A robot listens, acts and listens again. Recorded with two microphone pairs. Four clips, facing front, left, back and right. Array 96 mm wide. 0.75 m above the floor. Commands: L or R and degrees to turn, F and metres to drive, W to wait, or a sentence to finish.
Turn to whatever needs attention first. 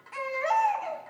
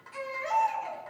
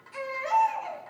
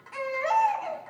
R30
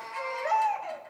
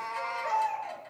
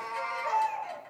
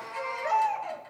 R15
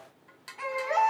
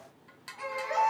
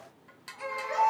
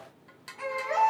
Found it: a baby crying, straight ahead.